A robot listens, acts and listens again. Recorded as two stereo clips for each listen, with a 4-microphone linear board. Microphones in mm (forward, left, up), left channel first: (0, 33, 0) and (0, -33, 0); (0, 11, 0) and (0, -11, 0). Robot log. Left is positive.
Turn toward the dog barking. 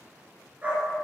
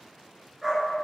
note: The dog barking: about 20° right or 160° right.
cmd yaw -20
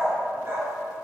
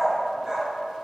note: The dog barking: about 35° right or 145° right.
cmd yaw -35
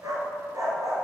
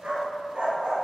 note: So it is at 125° right.
cmd yaw -125
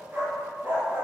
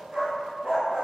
note: The dog barking is now 35° right.
cmd yaw -35
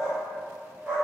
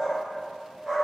note: The dog barking is now 20° right.
cmd yaw -20
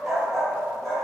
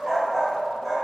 end: Facing the dog barking, over 4 m away.